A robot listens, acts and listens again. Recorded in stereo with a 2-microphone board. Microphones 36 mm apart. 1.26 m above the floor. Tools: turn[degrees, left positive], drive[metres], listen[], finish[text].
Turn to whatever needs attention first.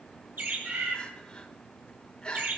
Thought: The crying: about 25° left or 155° left.
Action: turn[25]
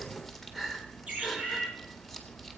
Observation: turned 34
Action: finish[Found it: crying, straight ahead.]